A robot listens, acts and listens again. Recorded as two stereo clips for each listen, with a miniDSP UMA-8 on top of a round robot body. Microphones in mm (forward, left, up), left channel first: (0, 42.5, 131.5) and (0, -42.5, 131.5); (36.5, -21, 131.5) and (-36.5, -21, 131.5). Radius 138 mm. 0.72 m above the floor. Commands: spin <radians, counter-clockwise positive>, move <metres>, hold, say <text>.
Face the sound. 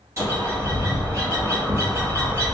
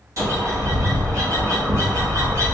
spin -2.53
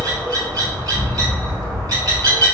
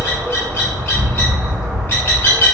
spin -0.96
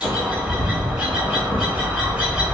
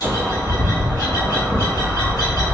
spin -0.17
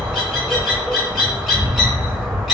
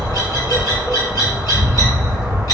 say Facing the bird, 1 to 2 m away.